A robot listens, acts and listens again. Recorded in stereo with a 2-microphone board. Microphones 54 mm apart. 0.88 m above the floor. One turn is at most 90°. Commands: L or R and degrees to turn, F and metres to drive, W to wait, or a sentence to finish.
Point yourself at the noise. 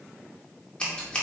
L20
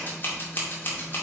L90
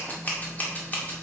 L30
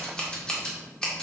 L15
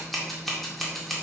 Found it: scissors, straight ahead, 2 to 4 m away.